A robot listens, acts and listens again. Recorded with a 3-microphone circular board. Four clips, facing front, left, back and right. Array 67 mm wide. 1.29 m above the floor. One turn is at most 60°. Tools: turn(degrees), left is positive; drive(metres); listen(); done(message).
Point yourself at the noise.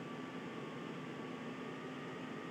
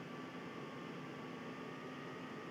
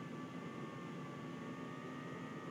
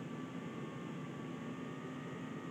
listen()
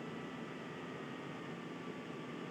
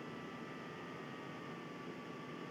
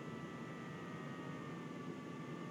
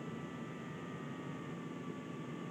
listen()
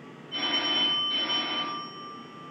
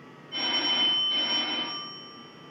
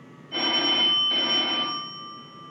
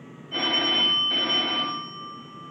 turn(degrees=-60)
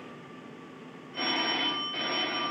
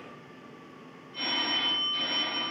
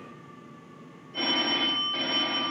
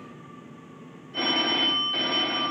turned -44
turn(degrees=-60)
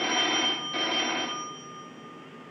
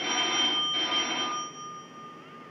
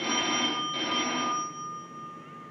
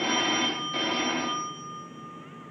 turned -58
turn(degrees=-25)
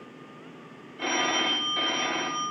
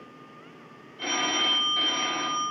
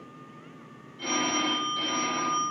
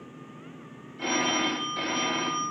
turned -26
done("Found it: a phone ringing, straight ahead.")